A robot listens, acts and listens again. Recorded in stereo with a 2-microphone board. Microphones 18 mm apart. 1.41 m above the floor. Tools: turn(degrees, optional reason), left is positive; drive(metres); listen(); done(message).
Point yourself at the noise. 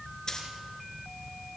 turn(degrees=35, reason="The dropped coin: about 35° left or 145° left.")
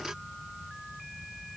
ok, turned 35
listen()
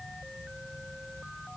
done("I heard a dropped coin, but can't make it out now. It was about straight ahead or 110° left.")